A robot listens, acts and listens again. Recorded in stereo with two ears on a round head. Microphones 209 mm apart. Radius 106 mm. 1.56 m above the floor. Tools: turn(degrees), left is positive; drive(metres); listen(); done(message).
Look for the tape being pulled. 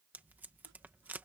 turn(degrees=-30)
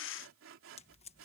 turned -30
turn(degrees=25)
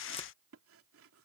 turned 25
listen()
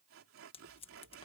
turn(degrees=25)
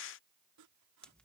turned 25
done("Facing the tape being pulled.")